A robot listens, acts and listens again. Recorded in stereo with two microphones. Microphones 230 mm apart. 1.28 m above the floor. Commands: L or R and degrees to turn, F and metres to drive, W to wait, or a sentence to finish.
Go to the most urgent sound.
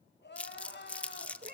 L50
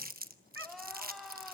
F1.0
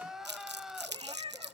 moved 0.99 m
F1.0
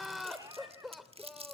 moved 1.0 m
F1.0
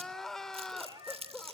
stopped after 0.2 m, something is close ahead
Arrived at the crying, straight ahead.